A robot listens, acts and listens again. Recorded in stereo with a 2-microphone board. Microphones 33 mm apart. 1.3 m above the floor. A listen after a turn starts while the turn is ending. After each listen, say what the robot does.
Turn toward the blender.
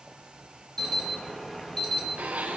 Turn 50° right.
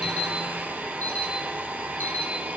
Turn 85° right.
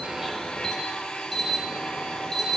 Turn 20° left.
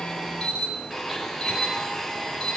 Facing the blender, over 4 m away.